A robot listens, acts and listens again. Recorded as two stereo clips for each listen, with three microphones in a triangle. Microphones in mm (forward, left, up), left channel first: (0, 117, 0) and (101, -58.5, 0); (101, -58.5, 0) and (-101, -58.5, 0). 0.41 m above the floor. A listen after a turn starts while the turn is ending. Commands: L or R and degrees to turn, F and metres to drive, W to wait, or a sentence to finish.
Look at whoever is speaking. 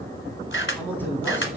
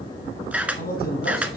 L40
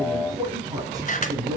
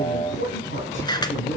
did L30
L10
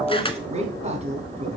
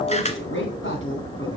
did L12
Found it: a man speaking, straight ahead.